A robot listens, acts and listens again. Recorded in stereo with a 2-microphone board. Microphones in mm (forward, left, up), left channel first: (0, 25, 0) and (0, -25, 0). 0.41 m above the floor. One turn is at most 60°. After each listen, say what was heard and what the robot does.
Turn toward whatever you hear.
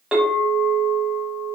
The clink: about 15° right or 165° right. Turn 15° right.
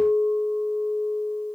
So it is at 150° right. Turn 60° right.
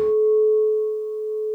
The clink is now 70° right. Turn 60° right.
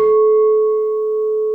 The clink is now 20° right. Turn 20° right.
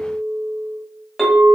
Facing the clink, under 1 m away.